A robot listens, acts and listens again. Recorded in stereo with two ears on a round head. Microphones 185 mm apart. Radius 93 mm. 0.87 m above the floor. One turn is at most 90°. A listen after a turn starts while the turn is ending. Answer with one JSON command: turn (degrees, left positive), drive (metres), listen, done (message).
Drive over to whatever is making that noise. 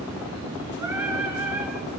{"turn": -30}
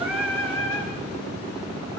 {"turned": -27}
{"turn": 20}
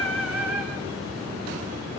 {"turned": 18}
{"drive": 1.0}
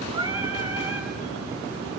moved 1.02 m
{"turn": -10}
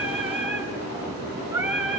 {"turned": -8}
{"drive": 1.0}
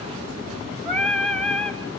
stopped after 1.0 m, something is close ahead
{"done": "Arrived at the singing, straight ahead."}